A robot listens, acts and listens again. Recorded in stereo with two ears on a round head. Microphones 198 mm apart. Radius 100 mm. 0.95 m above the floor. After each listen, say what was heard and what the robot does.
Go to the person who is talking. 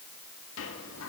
Keep listening.
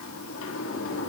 Keep listening.
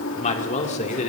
The man speaking: about 30° left or 150° left. Turn 30° left.
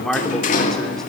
Drive 1.0 m forward.
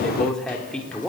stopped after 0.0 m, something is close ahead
Something is in my way. I am facing the man speaking but have not reached it.